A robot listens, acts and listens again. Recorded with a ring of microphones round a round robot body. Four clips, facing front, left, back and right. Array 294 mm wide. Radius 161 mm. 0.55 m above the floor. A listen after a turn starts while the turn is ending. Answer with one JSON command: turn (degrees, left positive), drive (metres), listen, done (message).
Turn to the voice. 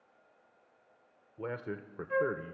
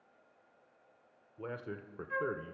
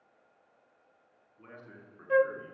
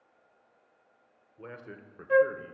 {"turn": 20}
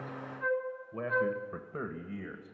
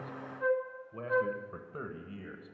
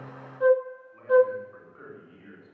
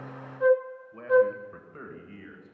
{"turn": 20}
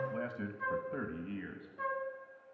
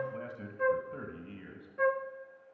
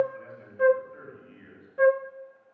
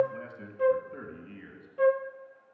{"turn": 10}
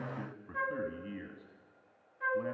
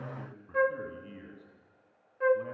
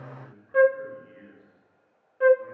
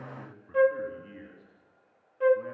{"turn": 10}
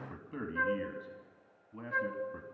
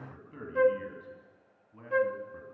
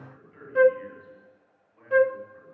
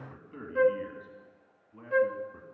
{"done": "Facing the man speaking."}